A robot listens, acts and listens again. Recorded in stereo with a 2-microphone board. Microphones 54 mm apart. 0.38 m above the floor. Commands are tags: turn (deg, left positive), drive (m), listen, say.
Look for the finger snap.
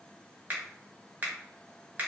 <turn deg="-35"/>
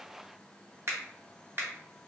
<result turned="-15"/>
<turn deg="-130"/>
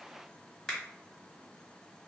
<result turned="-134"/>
<say>Found it: a finger snap, straight ahead.</say>